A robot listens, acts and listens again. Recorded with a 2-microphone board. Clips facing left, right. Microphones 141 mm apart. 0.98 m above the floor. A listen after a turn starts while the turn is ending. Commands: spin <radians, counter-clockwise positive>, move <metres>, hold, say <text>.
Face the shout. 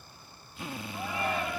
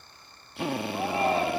spin -0.61
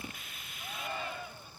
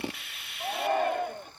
spin -1.92
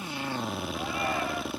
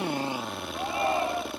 spin -0.52
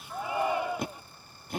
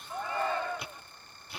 spin 0.26
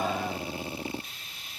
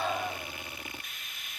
hold
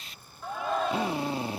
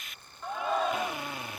say Found it: a shout, straight ahead.